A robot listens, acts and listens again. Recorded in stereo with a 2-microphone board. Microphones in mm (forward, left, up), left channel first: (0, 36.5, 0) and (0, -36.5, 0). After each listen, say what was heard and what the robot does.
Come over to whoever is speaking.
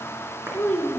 The child speaking: about 20° left or 160° left. Turn 20° left.
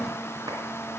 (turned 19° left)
Keep listening.
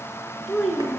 Drive 1.0 m forward.
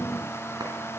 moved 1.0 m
Keep listening.
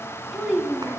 Drive 1.0 m forward.
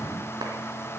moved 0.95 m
Keep listening.
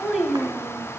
Drive 1.0 m forward.
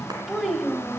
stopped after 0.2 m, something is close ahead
Arrived at the child speaking, straight ahead.